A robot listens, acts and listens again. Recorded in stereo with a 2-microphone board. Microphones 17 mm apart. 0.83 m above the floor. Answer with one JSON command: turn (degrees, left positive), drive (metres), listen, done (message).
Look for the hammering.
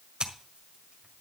{"listen": true}
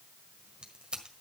{"listen": true}
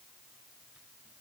{"done": "I can't make out hammering, only scissors."}